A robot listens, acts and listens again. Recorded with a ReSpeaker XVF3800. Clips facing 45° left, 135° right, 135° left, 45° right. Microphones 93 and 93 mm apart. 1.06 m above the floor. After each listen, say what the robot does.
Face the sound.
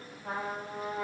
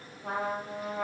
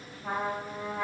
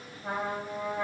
Turn 125° right.
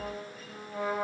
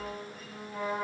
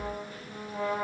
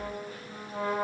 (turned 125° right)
Facing the trumpet, 1 to 2 m away.